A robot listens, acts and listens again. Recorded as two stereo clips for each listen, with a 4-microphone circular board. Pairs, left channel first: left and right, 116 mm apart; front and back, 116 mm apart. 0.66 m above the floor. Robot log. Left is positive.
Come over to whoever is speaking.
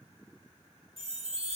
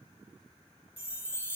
cmd idle
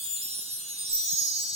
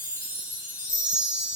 cmd idle
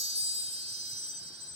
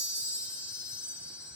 end: I can't make out anyone speaking, only a chime.